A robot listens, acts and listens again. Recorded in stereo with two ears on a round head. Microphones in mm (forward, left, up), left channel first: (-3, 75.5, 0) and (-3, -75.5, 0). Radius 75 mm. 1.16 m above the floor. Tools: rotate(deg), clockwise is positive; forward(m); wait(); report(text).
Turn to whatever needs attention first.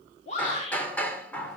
rotate(-40)
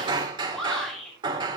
report("Facing the shout.")